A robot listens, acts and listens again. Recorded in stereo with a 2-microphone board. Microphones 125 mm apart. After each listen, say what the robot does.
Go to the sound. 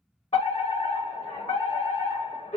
Turn 60° left.
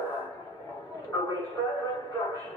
Turn 30° left.
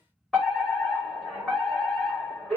Drive 1.0 m forward.
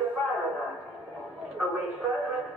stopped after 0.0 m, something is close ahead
Blocked. The fire alarm is further on, straight ahead.